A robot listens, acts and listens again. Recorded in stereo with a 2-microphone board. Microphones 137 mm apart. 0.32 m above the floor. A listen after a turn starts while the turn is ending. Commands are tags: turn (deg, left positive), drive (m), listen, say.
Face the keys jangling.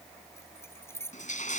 <turn deg="20"/>
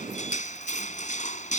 <listen/>
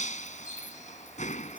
<listen/>
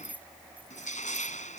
<turn deg="-10"/>
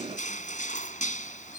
<listen/>
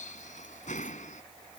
<listen/>
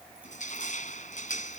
<say>I heard keys jangling from this way, but can't make it out now.</say>